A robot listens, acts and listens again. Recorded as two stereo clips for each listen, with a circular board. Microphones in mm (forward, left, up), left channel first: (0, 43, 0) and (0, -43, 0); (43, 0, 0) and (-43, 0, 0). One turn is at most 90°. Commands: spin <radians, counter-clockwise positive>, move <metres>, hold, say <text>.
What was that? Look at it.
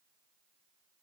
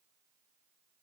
hold
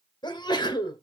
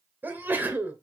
spin 1.57
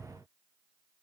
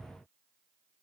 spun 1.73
spin 0.26
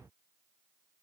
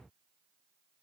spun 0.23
say I heard a sneeze from this way, but can't make it out now.